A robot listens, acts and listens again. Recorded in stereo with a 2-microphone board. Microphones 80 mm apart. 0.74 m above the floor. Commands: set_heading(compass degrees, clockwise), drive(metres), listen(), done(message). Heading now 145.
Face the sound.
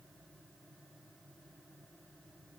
listen()
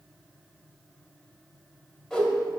set_heading(115)
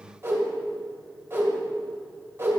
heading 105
set_heading(135)
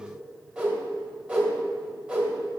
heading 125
set_heading(135)
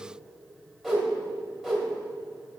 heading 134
done("Found it: a whoosh, straight ahead, 2 to 4 m away.")